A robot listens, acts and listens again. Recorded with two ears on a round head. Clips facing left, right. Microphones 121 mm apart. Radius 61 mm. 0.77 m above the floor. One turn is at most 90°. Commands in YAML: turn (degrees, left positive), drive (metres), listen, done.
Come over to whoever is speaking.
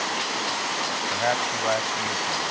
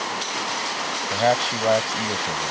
turn: -35
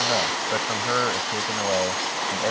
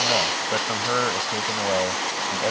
drive: 1.0
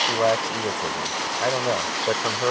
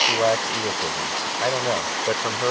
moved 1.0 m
drive: 1.0
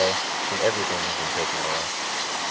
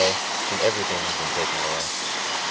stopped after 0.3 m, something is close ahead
done: "Blocked. The man speaking is further on, straight ahead."